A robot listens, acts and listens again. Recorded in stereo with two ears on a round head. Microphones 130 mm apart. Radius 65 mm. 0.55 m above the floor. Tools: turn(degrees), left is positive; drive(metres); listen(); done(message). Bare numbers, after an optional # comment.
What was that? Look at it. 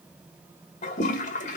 # The toilet flushing: about 55° left or 125° left.
turn(55)
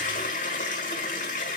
# So it is at 60° left.
turn(60)
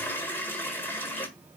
# The toilet flushing is now 15° left.
turn(15)
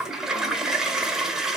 done("Found it: a toilet flushing, straight ahead, 1 to 2 m away.")